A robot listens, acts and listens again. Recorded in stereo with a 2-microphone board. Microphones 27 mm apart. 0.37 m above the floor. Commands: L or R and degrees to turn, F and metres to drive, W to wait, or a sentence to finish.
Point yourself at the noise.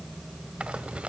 R45
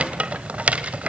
R80
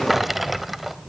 R10
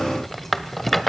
Found it: a rattle, straight ahead.